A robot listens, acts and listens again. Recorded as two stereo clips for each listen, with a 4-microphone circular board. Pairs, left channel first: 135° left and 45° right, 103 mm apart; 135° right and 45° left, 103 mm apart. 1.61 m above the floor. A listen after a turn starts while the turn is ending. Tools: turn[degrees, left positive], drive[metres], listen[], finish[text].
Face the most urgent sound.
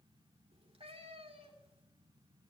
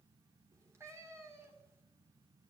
Action: listen[]
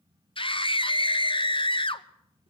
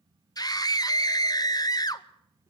Thought: The scream: 170° left.
Action: turn[170]
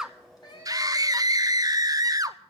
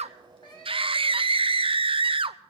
Thought: The scream is now 10° left.
Action: turn[10]
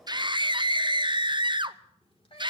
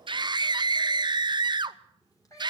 Action: finish[Found it: a scream, straight ahead.]